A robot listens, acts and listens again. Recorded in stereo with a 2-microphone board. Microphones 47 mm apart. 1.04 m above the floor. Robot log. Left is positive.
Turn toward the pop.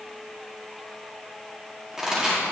cmd yaw -30
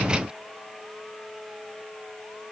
cmd idle
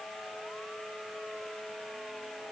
end: I heard a pop, but can't make it out now. It was about 15° left or 135° right.